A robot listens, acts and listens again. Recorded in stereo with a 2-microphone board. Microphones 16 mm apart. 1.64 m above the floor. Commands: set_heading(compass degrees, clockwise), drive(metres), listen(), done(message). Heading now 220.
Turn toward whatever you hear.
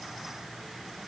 listen()
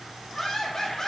set_heading(170)
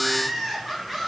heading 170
done("Found it: laughter, straight ahead, over 4 m away.")